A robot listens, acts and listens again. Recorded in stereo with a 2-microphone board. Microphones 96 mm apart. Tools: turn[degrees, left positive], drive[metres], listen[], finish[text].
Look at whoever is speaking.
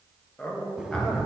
Action: turn[30]
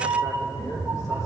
Action: listen[]
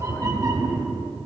Action: listen[]
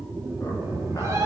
Action: finish[I heard a man speaking, but can't make it out now. It was about 20° right or 140° left.]